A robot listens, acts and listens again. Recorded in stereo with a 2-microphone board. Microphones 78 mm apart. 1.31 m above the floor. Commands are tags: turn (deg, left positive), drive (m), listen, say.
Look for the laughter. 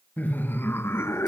<turn deg="35"/>
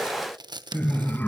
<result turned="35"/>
<turn deg="25"/>
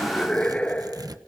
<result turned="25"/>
<turn deg="20"/>
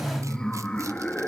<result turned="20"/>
<turn deg="15"/>
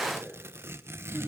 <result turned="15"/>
<turn deg="15"/>
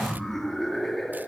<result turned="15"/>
<say>Facing the laughter, 2 to 4 m away.</say>